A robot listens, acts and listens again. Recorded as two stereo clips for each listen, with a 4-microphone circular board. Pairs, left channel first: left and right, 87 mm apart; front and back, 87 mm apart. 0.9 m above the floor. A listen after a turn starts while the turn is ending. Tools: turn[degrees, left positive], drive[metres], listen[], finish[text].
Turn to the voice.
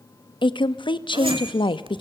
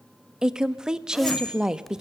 Thought: The woman speaking: 100° left.
Action: turn[100]
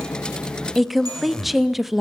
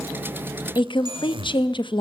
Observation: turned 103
Action: finish[Found it: a woman speaking, straight ahead.]